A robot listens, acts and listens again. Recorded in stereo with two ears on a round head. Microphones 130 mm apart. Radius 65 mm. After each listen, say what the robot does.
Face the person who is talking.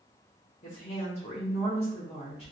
Turn 40° left.
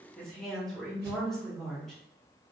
Found it: a woman speaking, straight ahead, 1 to 2 m away.